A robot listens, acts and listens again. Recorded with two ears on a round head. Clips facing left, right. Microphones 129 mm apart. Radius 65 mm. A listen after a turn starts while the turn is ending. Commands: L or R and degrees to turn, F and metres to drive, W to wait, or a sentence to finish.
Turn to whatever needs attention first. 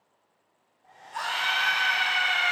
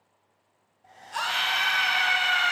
R90
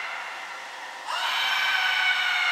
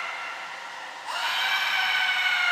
R10
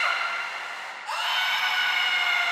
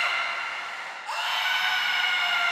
Facing the scream.